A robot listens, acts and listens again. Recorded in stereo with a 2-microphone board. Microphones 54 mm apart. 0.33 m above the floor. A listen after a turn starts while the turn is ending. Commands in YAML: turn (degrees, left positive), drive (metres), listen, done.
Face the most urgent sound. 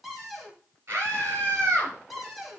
turn: -40
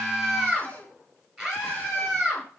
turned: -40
done: "Found it: a scream, straight ahead, over 4 m away."